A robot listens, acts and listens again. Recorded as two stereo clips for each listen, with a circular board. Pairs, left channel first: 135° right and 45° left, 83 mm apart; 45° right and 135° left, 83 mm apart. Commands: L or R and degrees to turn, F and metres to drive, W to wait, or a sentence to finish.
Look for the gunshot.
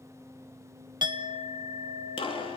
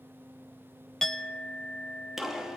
R140
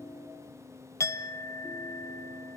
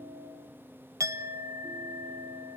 Facing where the gunshot came from. I can't hear it now.